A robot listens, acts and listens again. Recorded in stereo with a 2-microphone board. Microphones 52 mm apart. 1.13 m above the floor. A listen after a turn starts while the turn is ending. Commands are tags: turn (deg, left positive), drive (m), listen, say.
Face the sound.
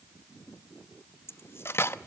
<turn deg="50"/>
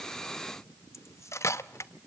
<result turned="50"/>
<turn deg="75"/>
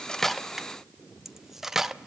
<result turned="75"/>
<turn deg="-10"/>
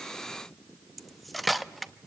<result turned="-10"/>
<say>Facing the cutlery clinking, under 1 m away.</say>